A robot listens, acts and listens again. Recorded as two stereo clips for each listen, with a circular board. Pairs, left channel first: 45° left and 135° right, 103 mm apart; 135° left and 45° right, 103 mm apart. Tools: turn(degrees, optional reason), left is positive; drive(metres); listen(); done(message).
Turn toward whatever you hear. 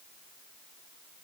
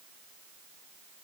listen()
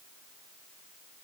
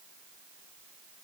listen()
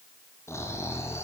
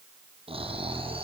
turn(degrees=-20, reason="The snoring: 20° right.")
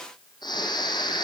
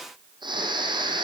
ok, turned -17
done("Found it: snoring, straight ahead, over 4 m away.")